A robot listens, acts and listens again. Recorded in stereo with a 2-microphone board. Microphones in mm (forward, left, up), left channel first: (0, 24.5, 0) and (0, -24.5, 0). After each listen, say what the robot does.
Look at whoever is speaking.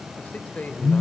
Turn 30° left.
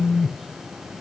Keep listening.
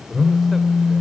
Keep listening.
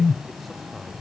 I heard a man speaking, but can't make it out now. It was about straight ahead or 120° left.